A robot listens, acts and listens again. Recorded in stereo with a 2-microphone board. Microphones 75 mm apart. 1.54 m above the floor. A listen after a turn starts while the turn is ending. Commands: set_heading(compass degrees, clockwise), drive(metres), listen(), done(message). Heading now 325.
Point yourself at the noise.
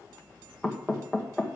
set_heading(295)
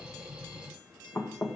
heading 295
set_heading(150)
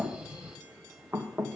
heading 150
set_heading(180)
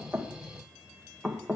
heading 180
done("Found it: knocking, straight ahead.")